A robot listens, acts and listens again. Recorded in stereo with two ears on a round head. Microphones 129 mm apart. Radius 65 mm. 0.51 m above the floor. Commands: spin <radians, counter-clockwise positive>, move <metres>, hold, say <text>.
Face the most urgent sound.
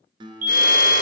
spin -0.96
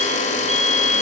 spin -0.79
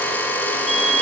say Found it: a fire alarm, straight ahead.